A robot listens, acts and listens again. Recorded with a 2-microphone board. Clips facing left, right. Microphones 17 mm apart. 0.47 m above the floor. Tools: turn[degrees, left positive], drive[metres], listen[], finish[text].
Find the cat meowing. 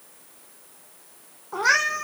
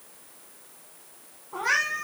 Action: turn[90]
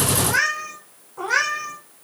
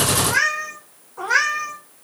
Thought: So it is at 10° right.
Action: turn[-10]
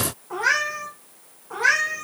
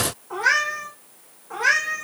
Action: finish[Facing the cat meowing, 2 to 4 m away.]